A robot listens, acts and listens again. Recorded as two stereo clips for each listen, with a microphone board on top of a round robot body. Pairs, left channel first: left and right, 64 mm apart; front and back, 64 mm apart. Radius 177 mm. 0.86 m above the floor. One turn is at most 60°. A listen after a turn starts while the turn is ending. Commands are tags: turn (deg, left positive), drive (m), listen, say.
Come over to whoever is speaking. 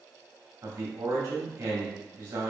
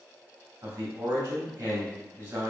<turn deg="-60"/>
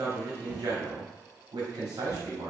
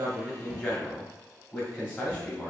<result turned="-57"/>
<turn deg="-60"/>
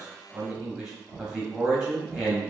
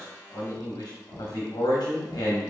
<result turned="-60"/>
<drive m="1.0"/>
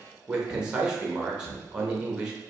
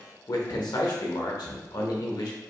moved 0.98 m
<turn deg="-10"/>
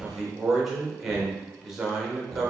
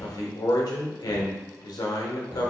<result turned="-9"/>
<drive m="1.0"/>
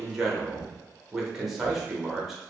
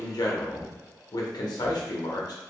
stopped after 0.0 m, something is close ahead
<say>I am next to the man speaking.</say>